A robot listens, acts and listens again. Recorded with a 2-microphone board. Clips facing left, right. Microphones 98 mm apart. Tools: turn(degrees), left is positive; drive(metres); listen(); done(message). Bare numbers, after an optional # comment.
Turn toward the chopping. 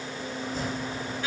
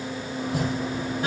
turn(-90)
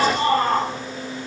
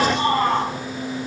listen()
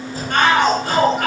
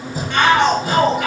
# The chopping is now 15° right.
turn(-15)
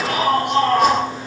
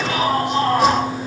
listen()
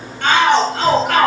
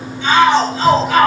listen()
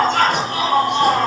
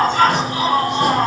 done("Facing where the chopping came from. I can't hear it now.")